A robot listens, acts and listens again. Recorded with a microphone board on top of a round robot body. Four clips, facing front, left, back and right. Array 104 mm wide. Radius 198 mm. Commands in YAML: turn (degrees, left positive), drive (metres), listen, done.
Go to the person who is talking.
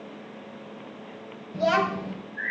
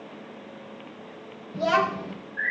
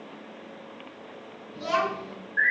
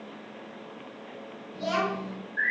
turn: 40
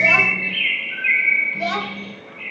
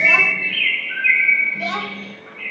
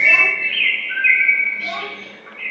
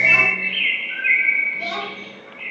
turn: 15
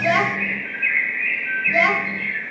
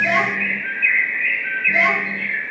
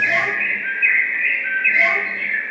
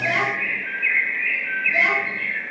listen: true
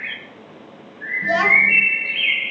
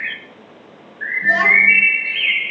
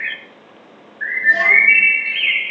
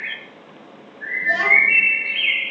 listen: true
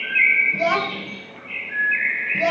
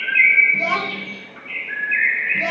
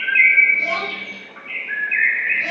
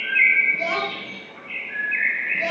done: "I heard a child speaking from this way, but can't make it out now. I did not reach it."